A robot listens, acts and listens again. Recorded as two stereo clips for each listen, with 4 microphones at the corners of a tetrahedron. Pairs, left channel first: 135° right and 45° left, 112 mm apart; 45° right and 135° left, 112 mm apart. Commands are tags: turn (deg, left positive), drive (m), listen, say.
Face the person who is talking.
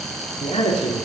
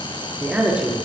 <turn deg="-150"/>
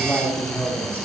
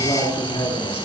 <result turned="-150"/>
<turn deg="-60"/>
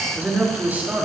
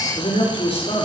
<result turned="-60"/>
<turn deg="-30"/>
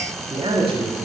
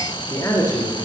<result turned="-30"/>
<turn deg="10"/>
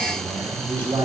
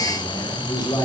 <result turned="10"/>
<say>Found it: a man speaking, straight ahead, over 4 m away.</say>